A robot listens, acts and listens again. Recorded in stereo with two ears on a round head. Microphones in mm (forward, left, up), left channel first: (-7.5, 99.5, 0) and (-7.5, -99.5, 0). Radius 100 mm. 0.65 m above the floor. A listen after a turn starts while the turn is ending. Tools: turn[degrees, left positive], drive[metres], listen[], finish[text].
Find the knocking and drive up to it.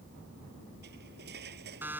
Action: listen[]
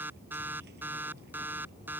Action: listen[]
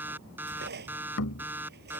Thought: The knocking: about 75° left or 105° left.
Action: turn[75]
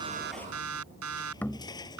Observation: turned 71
Thought: So it is at 10° left.
Action: turn[10]
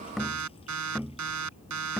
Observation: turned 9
Action: drive[1.0]
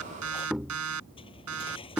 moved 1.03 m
Action: drive[1.0]
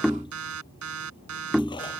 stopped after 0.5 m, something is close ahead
Action: finish[I am next to the knocking.]